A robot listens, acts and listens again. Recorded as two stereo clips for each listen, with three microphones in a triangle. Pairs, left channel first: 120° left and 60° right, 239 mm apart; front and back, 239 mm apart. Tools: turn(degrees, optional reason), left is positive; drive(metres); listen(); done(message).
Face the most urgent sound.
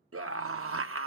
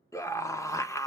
turn(degrees=-80, reason="The scream: 80° right.")
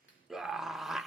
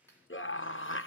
turn(degrees=30, reason="The scream is now 30° left.")
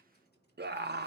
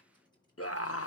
turn(degrees=-15, reason="The scream is now 15° right.")
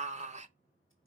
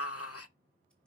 done("Found it: a scream, straight ahead.")